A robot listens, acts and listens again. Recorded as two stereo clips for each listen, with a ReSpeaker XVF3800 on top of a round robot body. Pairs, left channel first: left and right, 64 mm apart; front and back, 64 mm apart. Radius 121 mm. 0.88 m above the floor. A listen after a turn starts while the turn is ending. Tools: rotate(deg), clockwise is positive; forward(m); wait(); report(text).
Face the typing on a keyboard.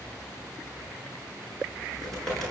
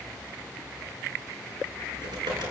rotate(-175)
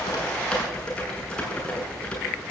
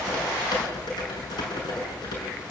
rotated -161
rotate(-15)
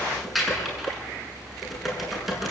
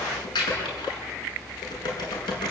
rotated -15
report("Found it: typing on a keyboard, straight ahead, over 4 m away.")